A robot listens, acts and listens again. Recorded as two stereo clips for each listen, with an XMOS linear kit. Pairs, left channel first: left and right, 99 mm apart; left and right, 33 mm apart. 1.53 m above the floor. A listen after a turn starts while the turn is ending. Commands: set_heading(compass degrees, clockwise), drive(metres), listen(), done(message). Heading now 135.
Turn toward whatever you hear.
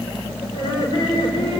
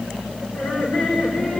set_heading(80)
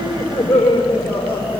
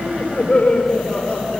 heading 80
set_heading(5)
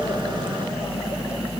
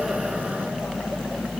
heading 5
listen()
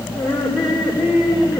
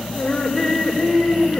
done("Found it: laughter, straight ahead.")